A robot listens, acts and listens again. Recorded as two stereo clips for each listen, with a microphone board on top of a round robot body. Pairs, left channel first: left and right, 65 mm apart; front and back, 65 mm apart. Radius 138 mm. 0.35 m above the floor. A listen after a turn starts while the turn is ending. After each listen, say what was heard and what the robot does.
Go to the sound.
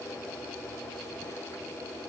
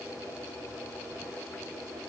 Keep listening.
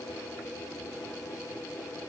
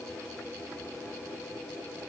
Keep listening.
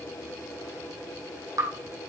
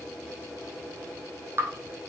The dripping: 130° right. Turn 130° right.
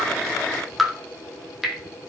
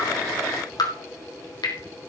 Drive 1.0 m forward.
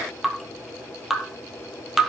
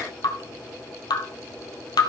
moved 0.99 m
Drive 1.0 m forward.
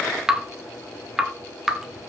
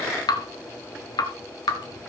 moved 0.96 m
Drive 1.0 m forward.
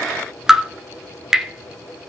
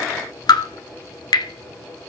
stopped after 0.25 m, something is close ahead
The dripping is now 10° right. Turn 10° right.
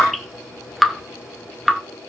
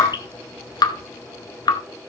I am next to the dripping.